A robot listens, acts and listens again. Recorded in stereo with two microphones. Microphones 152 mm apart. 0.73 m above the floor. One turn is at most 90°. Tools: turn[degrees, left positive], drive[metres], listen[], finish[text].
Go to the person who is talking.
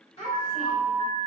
Thought: The child speaking: about 45° left or 135° left.
Action: turn[45]
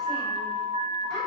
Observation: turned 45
Action: listen[]
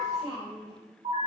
Action: drive[1.0]
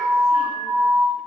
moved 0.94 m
Action: listen[]
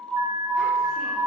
Action: listen[]
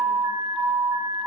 Action: finish[I heard a child speaking from this way, but can't make it out now. I did not reach it.]